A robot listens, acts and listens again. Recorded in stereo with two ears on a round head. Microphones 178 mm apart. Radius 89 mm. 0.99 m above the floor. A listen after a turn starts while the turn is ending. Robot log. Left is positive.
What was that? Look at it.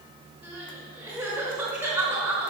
cmd yaw -30
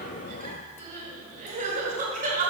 note: So it is at 140° right.
cmd yaw -140
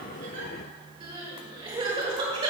note: The crying is now 25° right.
cmd yaw -25
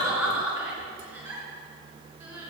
note: The crying is now 10° right.
cmd yaw -10
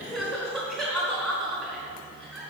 end: Facing the crying.